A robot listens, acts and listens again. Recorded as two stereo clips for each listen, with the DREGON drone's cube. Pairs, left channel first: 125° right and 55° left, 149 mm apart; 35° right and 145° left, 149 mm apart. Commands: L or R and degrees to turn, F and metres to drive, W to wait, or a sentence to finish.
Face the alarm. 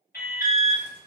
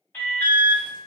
R115
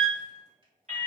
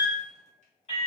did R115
L15
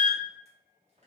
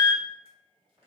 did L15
Facing the alarm.